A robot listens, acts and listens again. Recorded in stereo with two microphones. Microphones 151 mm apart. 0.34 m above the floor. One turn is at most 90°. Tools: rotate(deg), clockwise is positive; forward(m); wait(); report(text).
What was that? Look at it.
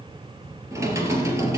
rotate(20)
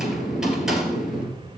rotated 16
report("Found it: typing on a keyboard, straight ahead.")